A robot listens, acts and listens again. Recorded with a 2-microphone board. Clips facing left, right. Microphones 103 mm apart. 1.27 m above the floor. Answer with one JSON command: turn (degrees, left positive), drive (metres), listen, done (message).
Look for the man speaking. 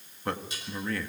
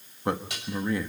{"turn": -20}
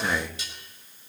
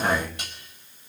{"done": "Facing the man speaking, 2 to 4 m away."}